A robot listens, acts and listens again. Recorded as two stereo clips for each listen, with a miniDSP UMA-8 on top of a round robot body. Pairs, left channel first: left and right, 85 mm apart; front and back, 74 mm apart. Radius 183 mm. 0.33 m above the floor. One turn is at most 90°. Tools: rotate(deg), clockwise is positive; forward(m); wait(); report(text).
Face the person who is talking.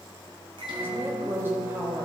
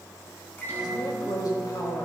rotate(25)
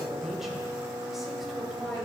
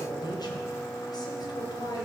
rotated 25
report("Found it: a woman speaking, straight ahead, 2 to 4 m away.")